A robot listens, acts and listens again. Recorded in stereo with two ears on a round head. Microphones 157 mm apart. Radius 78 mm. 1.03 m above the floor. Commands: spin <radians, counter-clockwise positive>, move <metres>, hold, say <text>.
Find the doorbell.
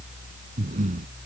hold
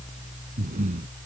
hold
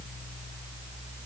say I can't make out a doorbell, only breathing.